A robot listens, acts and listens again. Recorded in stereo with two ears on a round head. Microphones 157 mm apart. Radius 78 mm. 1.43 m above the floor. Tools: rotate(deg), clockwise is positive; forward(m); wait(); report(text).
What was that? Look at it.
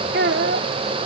rotate(65)
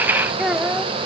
report("Found it: a child speaking, straight ahead.")